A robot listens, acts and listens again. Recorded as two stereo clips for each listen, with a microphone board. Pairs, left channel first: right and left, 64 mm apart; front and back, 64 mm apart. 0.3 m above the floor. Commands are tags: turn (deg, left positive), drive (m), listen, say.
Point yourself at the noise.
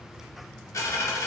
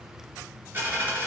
<turn deg="-125"/>
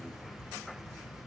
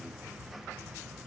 <say>I heard a dropped coin from this way, but can't make it out now.</say>